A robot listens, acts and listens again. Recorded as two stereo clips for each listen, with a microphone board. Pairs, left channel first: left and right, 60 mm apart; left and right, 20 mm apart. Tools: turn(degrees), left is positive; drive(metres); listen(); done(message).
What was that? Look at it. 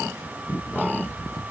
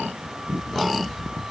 listen()
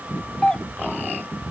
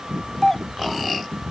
turn(degrees=30)
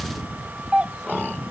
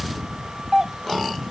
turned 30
turn(degrees=-20)
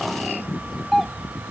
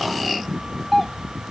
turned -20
done("Found it: a doorbell, straight ahead.")